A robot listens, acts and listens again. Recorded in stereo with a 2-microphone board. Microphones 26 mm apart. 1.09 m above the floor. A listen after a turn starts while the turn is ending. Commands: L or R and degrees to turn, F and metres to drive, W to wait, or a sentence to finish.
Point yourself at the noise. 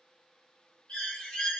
L50
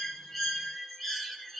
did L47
Facing the bird.